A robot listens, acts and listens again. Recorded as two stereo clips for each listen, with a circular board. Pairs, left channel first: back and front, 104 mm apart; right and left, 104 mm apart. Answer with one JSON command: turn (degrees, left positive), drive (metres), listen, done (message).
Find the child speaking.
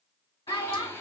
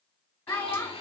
{"turn": -150}
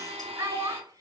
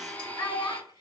{"turn": -50}
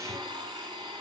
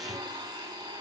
{"listen": true}
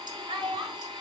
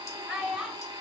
{"done": "Found it: a child speaking, straight ahead."}